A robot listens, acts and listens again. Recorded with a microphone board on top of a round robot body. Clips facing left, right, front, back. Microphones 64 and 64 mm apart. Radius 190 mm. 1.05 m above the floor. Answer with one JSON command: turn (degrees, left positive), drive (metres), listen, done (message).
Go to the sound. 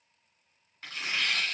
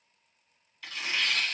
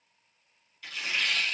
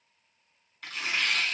{"turn": 145}
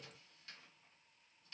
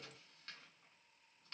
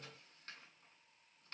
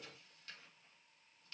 {"listen": true}
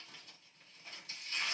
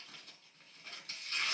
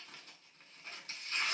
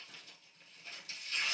{"turn": -50}
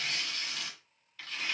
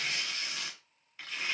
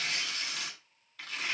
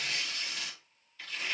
{"turn": -20}
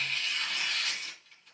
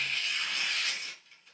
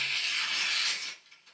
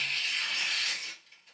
{"drive": 1.0}
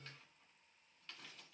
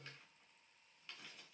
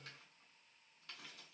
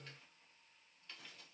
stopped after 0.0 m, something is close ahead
{"listen": true}
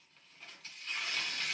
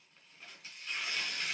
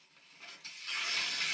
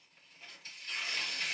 {"done": "Something is in my way. I am facing the tearing paper but have not reached it."}